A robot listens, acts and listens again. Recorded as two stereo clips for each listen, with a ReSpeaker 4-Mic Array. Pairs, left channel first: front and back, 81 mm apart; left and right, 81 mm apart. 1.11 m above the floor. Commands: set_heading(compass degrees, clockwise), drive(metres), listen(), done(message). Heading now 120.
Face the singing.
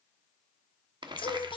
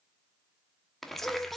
done("Found it: singing, straight ahead, under 1 m away.")